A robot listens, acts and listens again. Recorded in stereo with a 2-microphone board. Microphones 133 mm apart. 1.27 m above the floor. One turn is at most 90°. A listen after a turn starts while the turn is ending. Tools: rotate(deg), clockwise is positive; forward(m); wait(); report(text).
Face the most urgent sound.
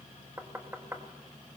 wait()
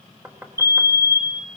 rotate(20)
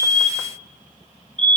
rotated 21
rotate(90)
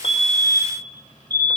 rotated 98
rotate(35)
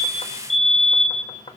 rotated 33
report("Facing the fire alarm, 1 to 2 m away.")